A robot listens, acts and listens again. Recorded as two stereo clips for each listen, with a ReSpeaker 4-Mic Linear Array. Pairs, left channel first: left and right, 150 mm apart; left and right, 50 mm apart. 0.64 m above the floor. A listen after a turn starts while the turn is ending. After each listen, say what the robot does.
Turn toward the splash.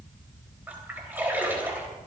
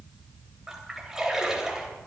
Turn 30° right.
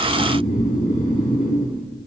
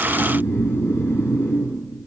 Keep listening.
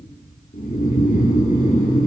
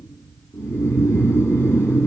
I heard a splash, but can't make it out now. It was about 15° left or 135° right.